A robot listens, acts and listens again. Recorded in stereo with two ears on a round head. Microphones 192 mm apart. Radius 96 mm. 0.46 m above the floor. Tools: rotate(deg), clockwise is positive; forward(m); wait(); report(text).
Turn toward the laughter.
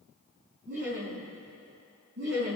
rotate(55)
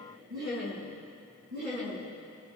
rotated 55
rotate(60)
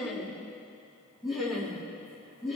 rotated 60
report("Facing the laughter, over 4 m away.")